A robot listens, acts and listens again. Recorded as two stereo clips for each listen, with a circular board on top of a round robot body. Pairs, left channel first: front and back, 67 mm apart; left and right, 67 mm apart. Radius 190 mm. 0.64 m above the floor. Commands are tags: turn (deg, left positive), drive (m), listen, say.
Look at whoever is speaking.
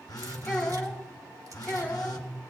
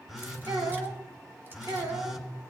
<turn deg="-75"/>
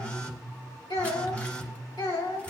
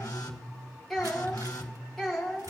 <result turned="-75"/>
<say>Facing the child speaking, 2 to 4 m away.</say>